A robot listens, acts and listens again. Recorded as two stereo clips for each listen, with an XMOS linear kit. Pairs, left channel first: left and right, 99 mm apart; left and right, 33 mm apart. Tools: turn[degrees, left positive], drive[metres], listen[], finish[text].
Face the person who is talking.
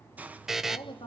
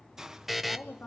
Thought: The woman speaking: about 70° left or 110° left.
Action: turn[70]
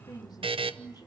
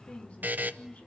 Thought: So it is at 45° left.
Action: turn[45]
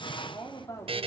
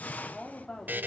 Thought: The woman speaking is now 40° left.
Action: turn[40]
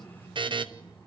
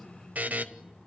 Action: listen[]
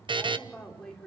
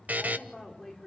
Action: finish[Found it: a woman speaking, straight ahead.]